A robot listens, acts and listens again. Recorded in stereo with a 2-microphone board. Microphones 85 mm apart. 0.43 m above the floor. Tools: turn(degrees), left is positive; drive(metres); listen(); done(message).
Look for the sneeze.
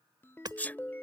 turn(degrees=20)
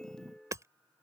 listen()
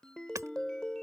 done("I heard a sneeze, but can't make it out now. It was about straight ahead or 140° left.")